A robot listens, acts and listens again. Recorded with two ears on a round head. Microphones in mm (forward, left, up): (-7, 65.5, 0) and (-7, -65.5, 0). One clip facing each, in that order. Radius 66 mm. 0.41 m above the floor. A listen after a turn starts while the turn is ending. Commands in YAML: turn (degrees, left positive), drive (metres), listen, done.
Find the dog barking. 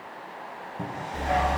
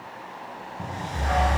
turn: 30
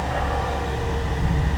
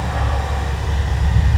turn: 120
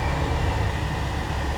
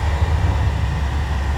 turn: 30
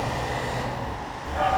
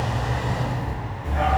done: "Facing the dog barking, 2 to 4 m away."